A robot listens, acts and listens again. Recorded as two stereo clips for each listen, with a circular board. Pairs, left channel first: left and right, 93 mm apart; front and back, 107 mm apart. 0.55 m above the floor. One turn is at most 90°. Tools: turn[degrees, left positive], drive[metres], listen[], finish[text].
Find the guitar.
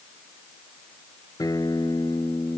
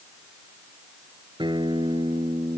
Thought: The guitar: 140° left.
Action: turn[90]
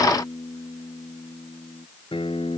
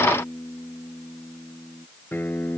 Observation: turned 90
Thought: The guitar is now 70° left.
Action: turn[70]
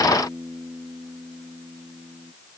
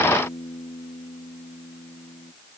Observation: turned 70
Thought: The guitar is now 10° right.
Action: turn[-10]
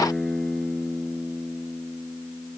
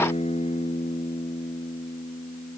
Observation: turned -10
Action: finish[Facing the guitar.]